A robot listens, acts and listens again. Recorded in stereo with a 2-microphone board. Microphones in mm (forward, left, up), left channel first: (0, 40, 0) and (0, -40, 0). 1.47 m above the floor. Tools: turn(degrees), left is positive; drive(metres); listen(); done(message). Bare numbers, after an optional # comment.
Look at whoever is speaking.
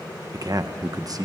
# The man speaking: about 50° right or 130° right.
turn(-50)
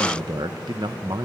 # So it is at 75° right.
turn(-75)
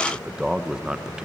# The man speaking is now 10° right.
turn(-10)
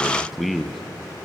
done("Facing the man speaking.")